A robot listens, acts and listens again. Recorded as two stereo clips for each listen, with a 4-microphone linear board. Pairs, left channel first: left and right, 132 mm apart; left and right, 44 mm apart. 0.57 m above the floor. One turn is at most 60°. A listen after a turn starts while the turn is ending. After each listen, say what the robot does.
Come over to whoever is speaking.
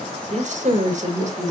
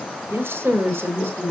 Turn 60° right.
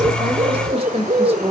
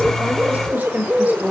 Turn 50° right.
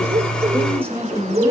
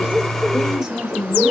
Turn 20° right.
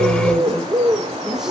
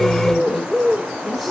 Keep listening.
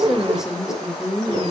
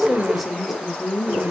Drive 1.0 m forward.
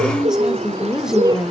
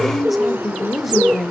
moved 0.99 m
Drive 1.0 m forward.
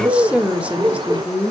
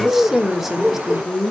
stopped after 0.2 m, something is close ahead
Turn 10° right.
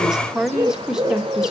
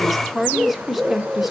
Arrived at the woman speaking, straight ahead.